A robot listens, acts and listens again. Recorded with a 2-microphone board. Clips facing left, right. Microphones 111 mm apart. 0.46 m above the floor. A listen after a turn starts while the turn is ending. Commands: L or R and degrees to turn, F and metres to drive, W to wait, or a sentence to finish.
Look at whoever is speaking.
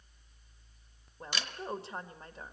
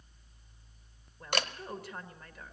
L30
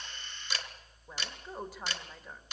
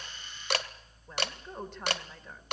L10
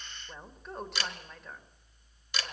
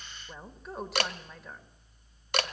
Found it: a woman speaking, straight ahead, 1 to 2 m away.